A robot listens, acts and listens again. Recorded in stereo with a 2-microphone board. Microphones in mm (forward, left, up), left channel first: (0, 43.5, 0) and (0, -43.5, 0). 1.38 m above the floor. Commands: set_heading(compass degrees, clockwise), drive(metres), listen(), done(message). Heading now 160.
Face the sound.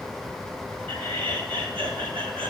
set_heading(250)
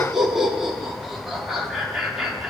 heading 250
done("Found it: laughter, straight ahead.")